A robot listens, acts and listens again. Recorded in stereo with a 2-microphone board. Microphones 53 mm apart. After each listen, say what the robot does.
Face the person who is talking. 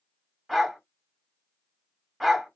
Keep listening.
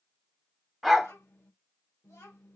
Turn 65° left.
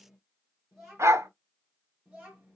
Turn 10° right.
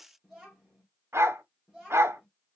Found it: a child speaking, straight ahead, 1 to 2 m away.